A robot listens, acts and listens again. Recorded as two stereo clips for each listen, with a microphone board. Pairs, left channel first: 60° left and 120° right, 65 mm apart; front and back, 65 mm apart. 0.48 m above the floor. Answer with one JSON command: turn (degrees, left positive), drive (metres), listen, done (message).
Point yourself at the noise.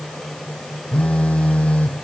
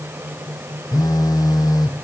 {"turn": -10}
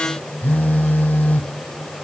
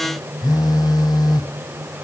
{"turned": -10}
{"done": "Found it: a phone buzzing, straight ahead."}